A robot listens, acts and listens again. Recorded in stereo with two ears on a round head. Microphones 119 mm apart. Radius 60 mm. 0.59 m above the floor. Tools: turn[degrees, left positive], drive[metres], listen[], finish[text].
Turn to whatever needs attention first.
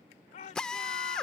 Thought: The shout: about 55° left or 125° left.
Action: turn[55]
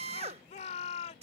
Thought: So it is at 60° left.
Action: turn[60]
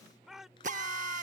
Action: finish[Found it: a shout, straight ahead.]